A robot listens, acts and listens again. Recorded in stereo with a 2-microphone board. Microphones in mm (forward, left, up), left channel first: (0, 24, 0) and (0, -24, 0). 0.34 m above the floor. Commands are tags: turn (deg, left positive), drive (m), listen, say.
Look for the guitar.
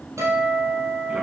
<turn deg="-90"/>
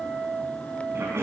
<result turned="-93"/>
<turn deg="-10"/>
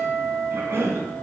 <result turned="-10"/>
<say>Found it: a guitar, straight ahead.</say>